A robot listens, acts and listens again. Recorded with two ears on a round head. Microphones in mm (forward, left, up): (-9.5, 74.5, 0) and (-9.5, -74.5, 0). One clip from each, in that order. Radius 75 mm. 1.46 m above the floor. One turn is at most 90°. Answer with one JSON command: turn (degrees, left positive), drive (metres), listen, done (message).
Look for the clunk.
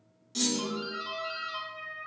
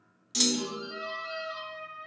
{"turn": -50}
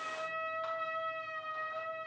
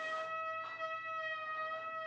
{"listen": true}
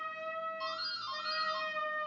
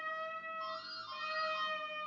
{"done": "I heard a clunk, but can't make it out now. It was about straight ahead or 80° right."}